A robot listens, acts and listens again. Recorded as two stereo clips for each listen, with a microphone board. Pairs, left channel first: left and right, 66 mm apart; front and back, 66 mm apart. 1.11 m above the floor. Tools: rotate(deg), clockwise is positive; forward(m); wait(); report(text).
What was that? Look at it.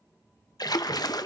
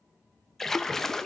rotate(-85)
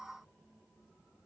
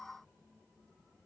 report("Facing where the splash came from. I can't hear it now.")